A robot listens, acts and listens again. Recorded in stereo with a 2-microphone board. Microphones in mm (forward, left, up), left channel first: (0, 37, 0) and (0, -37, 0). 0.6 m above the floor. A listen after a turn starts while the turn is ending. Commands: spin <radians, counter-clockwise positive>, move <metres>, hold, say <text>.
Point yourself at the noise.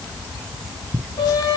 spin 1.13
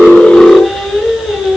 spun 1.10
say Facing the singing, 2 to 4 m away.